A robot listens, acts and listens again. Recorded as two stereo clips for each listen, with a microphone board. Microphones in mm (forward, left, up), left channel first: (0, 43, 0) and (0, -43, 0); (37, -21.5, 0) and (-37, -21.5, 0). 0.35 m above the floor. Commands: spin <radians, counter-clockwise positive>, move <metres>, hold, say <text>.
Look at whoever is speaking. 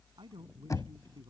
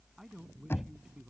spin -1.75
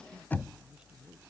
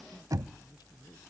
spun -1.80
hold
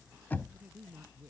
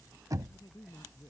spin -0.35
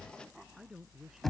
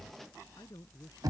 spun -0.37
say Found it: a man speaking, straight ahead.